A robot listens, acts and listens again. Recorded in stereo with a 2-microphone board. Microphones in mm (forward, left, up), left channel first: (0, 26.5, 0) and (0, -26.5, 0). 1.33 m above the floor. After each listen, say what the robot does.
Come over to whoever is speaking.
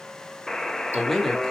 Turn 30° left.
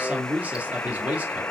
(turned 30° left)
Turn 30° right.
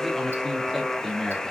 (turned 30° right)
Drive 1.0 m forward.
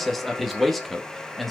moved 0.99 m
Drive 1.0 m forward.
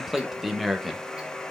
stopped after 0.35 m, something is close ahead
I am next to the man speaking.